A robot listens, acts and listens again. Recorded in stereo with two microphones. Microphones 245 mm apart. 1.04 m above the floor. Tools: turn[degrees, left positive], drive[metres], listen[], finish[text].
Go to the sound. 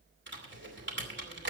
Thought: The typing on a keyboard: about 50° right or 130° right.
Action: turn[-50]
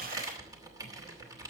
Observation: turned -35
Thought: So it is at 15° right.
Action: turn[-15]
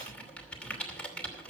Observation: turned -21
Action: drive[1.0]
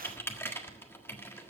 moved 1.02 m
Thought: The typing on a keyboard is now 10° left.
Action: turn[10]
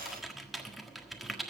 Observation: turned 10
Action: drive[1.0]
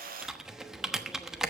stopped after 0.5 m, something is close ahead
Action: finish[Arrived at the typing on a keyboard, straight ahead.]